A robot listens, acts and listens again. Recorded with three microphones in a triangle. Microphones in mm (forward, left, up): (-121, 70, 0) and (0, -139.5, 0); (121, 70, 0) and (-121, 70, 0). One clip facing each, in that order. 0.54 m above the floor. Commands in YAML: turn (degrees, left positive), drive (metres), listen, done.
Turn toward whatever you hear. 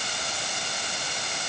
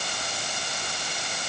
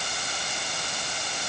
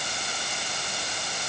listen: true
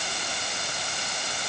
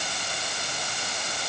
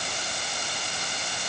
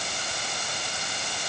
listen: true
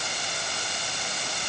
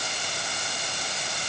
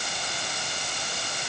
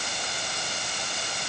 done: "I can't make out anything."